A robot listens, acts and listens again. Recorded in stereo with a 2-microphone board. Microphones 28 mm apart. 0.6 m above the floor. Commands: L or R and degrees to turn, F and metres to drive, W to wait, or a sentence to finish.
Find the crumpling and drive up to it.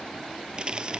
R35
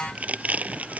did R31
R115
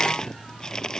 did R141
L25
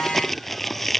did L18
F1.0
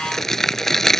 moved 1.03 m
L15
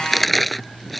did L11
F1.0
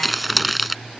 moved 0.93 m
F1.0
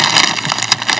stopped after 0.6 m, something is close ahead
Arrived at the crumpling, straight ahead.